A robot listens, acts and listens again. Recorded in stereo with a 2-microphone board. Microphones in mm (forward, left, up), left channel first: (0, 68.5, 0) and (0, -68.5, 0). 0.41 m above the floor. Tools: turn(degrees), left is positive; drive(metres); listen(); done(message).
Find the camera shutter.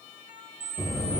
turn(degrees=-90)
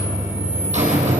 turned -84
listen()
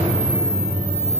listen()
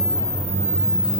done("Facing where the camera shutter came from. I can't hear it now.")